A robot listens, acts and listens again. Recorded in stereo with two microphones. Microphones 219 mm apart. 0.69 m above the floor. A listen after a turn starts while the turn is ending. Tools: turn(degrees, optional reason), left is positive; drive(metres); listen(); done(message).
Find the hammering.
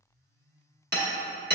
turn(degrees=-50, reason="The hammering: about 50° right or 130° right.")
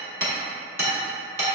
turn(degrees=-75, reason="So it is at 75° right.")
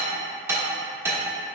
turn(degrees=-15, reason="The hammering is now 15° right.")
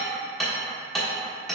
done("Found it: hammering, straight ahead, 1 to 2 m away.")